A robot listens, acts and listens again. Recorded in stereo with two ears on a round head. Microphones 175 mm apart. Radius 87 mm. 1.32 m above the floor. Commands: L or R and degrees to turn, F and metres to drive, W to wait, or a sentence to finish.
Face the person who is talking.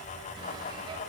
W
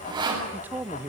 R30
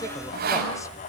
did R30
W
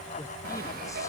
W
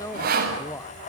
L15
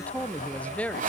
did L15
Facing the man speaking.